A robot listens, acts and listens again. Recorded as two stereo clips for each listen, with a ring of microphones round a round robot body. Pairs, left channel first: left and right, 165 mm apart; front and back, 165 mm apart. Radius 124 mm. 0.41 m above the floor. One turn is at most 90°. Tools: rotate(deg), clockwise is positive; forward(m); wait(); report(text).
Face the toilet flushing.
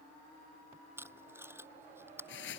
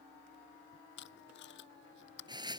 wait()
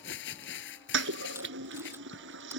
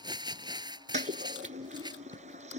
rotate(90)
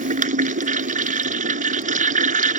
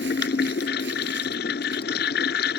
rotate(50)
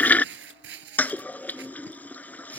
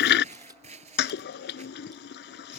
rotate(-10)
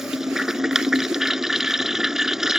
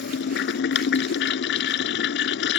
report("Found it: a toilet flushing, straight ahead.")